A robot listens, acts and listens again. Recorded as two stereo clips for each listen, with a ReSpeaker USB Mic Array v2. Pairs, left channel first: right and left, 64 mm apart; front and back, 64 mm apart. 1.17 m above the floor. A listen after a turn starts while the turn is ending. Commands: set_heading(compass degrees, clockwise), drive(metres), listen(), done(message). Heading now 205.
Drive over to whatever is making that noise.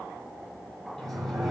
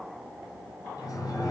drive(1.0)
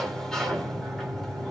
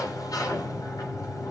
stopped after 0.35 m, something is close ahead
set_heading(215)
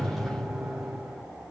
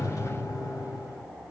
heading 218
done("Blocked. The sliding door is further on, straight ahead.")